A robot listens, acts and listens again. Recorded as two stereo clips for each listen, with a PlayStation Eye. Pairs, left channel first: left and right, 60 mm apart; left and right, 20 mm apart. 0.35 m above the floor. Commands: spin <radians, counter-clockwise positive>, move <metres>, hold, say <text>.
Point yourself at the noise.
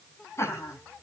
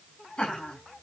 spin 0.79
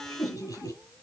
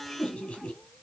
spin 1.92
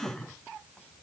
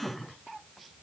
spin 0.26
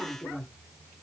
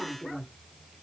say Facing the laughter.